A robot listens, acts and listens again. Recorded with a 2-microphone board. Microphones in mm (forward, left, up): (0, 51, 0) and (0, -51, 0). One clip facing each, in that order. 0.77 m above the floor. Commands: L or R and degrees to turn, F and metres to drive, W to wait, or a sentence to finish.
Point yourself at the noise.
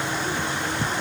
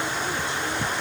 W
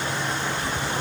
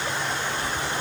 W
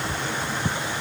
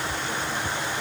I can't make out anything to turn to.